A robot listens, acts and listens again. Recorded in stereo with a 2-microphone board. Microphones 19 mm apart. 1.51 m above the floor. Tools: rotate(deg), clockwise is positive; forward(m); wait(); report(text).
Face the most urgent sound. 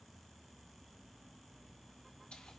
wait()
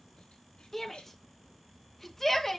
rotate(-20)
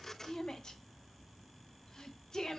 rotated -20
rotate(-140)
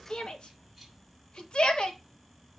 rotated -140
rotate(-55)
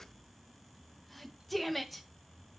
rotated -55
report("Facing the shout, 2 to 4 m away.")